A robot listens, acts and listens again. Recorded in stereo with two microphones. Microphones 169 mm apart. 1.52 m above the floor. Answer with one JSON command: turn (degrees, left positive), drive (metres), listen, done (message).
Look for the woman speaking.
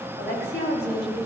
{"turn": 90}
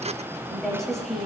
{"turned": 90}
{"done": "Facing the woman speaking."}